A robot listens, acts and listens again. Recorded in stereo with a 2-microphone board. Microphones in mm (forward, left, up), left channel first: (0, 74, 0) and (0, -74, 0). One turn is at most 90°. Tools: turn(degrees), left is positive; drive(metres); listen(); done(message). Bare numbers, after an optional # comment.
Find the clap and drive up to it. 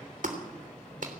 # The clap: about 65° right or 115° right.
turn(-65)
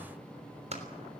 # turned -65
# So it is at 50° right.
turn(-50)
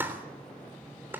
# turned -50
# The clap is now 15° right.
turn(-15)
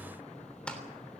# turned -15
drive(1.0)
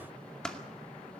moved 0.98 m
drive(1.0)
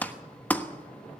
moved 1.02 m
# The clap is now 10° left.
turn(10)
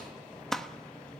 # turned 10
drive(1.0)
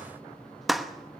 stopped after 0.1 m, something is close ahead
done("Arrived at the clap, straight ahead.")